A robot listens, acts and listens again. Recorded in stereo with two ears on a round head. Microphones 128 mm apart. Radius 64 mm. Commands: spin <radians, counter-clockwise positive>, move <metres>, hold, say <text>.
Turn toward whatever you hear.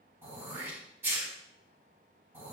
spin -0.52
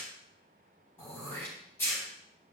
spin 0.26
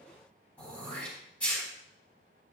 spin 0.17
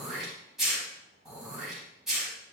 say Found it: throat clearing, straight ahead.